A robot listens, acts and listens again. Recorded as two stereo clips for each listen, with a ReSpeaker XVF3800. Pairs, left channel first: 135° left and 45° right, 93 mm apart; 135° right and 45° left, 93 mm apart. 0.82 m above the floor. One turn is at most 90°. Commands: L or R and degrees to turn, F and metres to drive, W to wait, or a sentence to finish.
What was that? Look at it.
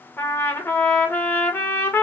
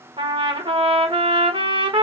L70
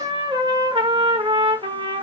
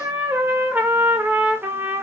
R25
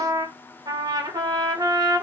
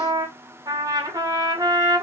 Facing the trumpet.